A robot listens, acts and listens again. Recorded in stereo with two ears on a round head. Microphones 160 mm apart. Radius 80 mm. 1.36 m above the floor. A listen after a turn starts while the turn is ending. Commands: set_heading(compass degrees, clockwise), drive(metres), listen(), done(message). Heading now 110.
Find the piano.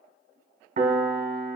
set_heading(155)
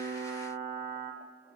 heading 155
set_heading(240)
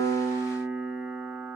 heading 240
set_heading(260)
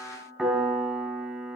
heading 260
set_heading(270)
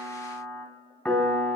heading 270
done("Facing the piano.")